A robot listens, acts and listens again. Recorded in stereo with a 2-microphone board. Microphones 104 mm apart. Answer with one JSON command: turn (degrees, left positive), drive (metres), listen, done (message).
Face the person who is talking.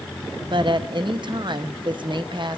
{"turn": -50}
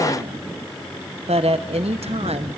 {"turn": -80}
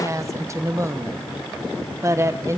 {"turn": -30}
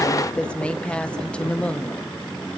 {"turn": 10}
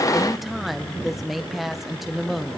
{"done": "Facing the woman speaking, under 1 m away."}